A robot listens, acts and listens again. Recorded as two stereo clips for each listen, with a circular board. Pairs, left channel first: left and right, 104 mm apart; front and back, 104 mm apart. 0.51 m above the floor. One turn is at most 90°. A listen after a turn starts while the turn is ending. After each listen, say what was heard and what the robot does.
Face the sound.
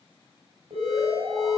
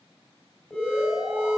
The alarm: 85° right. Turn 85° right.
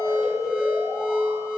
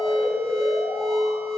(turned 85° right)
Found it: an alarm, straight ahead.